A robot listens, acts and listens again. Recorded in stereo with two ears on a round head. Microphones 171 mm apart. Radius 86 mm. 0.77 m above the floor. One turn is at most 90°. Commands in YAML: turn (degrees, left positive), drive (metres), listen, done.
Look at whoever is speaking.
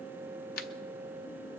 listen: true
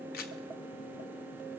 listen: true
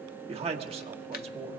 turn: -35
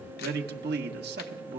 turn: -90
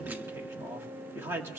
turn: -15
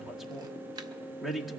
done: "Facing the man speaking."